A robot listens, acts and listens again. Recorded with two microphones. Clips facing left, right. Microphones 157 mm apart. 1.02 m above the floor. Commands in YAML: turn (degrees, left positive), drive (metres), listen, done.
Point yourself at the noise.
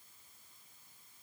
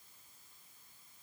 listen: true
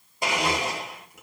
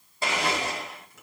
turn: 15
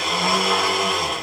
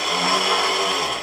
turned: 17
done: "Facing the blender, 1 to 2 m away."